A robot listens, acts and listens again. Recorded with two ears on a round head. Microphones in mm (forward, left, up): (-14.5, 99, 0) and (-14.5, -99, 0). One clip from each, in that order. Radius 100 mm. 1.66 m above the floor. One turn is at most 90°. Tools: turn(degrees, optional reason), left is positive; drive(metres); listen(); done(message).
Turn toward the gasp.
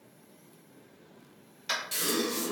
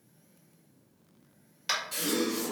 turn(degrees=30, reason="The gasp: about 30° left or 150° left.")
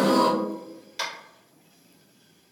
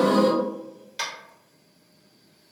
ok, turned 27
turn(degrees=90, reason="So it is at 120° left.")
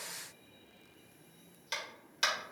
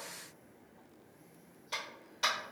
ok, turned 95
turn(degrees=25, reason="Nothing new. It was at 25° left.")
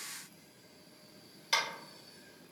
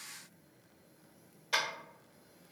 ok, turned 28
done("Facing where the gasp came from. I can't hear it now.")